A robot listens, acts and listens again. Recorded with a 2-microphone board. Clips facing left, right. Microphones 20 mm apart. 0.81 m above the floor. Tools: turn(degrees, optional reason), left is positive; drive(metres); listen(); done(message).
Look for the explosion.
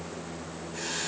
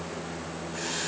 listen()
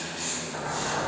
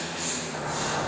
turn(degrees=30)
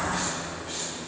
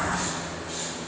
turn(degrees=-25, reason="So it is at 25° right.")
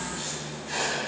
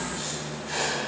done("Facing where the explosion came from. I can't hear it now.")